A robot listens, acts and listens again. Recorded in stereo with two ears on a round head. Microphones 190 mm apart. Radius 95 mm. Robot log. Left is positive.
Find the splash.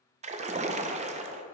note: The splash: about 35° right or 145° right.
cmd yaw -35
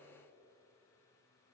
cmd idle
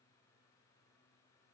end: I heard a splash, but can't make it out now. It was about straight ahead or 110° right.